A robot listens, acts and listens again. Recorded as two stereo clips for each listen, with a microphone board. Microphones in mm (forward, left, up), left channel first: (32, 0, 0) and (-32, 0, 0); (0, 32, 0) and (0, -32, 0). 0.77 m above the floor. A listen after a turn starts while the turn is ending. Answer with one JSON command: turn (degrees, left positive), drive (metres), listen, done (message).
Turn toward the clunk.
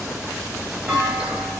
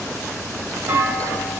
{"turn": -115}
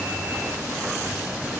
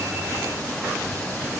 {"done": "Facing where the clunk came from. I can't hear it now."}